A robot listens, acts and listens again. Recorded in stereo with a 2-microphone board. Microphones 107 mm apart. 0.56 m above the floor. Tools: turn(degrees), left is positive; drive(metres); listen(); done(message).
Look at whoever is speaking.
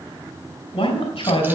turn(degrees=65)
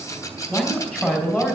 turn(degrees=10)
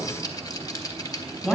done("Found it: a man speaking, straight ahead.")